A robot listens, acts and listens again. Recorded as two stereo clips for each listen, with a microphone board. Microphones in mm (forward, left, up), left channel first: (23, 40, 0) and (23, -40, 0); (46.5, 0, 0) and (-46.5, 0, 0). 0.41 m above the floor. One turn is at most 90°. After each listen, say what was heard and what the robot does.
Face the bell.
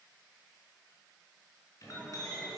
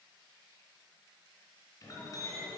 Keep listening.
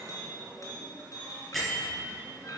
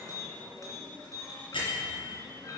Found it: a bell, straight ahead.